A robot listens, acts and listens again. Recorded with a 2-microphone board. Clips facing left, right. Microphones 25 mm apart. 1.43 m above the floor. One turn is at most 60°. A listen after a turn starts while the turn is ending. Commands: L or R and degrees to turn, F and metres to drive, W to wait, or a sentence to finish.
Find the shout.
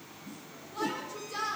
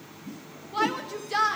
R60
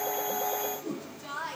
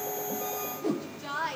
R30
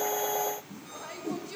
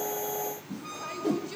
W
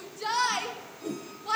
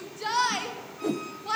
R10
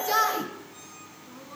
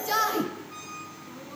Found it: a shout, straight ahead.